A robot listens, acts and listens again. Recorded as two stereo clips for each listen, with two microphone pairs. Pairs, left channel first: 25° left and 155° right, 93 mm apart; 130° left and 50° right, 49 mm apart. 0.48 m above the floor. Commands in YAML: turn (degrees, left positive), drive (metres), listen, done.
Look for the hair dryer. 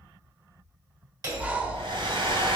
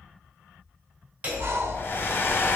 turn: 175
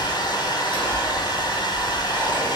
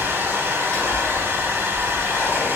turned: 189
turn: -15
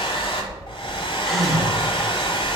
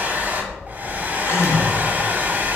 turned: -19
done: "Facing the hair dryer, 1 to 2 m away."